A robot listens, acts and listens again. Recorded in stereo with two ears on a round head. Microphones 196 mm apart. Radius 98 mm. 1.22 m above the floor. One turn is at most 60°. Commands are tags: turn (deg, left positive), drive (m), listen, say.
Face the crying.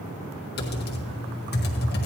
<listen/>
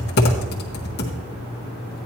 <listen/>
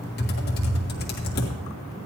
<say>I can't make out crying, only typing on a keyboard.</say>